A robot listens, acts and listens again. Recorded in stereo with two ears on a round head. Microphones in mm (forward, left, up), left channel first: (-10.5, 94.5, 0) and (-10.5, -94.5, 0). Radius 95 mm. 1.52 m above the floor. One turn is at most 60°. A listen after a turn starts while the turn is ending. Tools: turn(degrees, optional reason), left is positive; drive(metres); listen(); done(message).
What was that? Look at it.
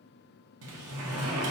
turn(degrees=-60)
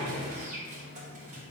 turn(degrees=-35, reason="So it is at 35° right.")
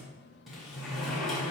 done("Found it: a sliding door, straight ahead, under 1 m away.")